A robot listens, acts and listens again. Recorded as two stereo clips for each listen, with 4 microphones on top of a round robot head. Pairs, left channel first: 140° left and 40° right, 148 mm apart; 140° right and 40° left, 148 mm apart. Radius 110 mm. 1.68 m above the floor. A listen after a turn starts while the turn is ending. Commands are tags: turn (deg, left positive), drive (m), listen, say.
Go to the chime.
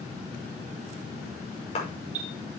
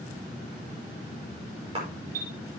<drive m="1.0"/>
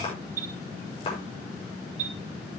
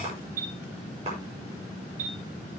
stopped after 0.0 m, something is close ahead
<say>Something is in my way. I am facing the chime but have not reached it.</say>